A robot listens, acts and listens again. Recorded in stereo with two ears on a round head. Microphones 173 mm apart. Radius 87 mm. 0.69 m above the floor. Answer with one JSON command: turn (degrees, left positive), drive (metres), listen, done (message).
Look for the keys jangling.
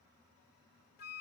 {"listen": true}
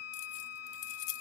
{"turn": 60}
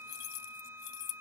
{"turn": 65}
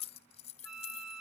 {"turn": 30}
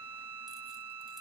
{"listen": true}
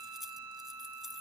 {"listen": true}
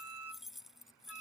{"done": "Found it: keys jangling, straight ahead."}